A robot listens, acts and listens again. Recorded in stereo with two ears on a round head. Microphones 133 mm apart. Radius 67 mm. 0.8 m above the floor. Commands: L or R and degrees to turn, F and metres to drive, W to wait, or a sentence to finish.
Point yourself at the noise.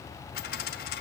L90
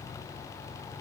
I heard a dropped coin from this way, but can't make it out now.